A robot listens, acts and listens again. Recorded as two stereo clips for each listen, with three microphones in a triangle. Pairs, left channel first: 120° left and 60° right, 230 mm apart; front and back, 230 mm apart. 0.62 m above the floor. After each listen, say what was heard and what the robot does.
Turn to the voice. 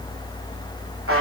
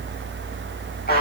Keep listening.
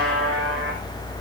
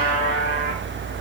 Keep listening.
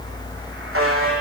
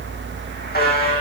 I can't make out anyone speaking to turn to.